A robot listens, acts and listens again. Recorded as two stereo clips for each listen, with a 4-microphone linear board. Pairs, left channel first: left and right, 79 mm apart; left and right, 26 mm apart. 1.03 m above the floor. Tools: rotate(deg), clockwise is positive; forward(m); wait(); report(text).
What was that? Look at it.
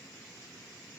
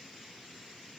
wait()
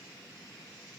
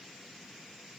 wait()
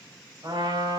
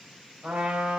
rotate(65)
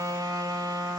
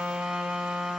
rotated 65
rotate(50)
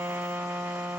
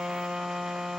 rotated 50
rotate(25)
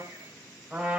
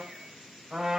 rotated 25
rotate(15)
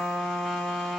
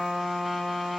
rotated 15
report("Facing the trumpet, over 4 m away.")